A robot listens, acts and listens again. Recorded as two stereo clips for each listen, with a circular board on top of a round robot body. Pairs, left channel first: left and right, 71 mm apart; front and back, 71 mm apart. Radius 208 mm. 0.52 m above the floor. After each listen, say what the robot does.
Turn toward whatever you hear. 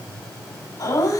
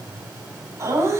Turn 130° left.
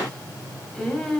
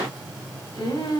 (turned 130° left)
Found it: laughter, straight ahead, 2 to 4 m away.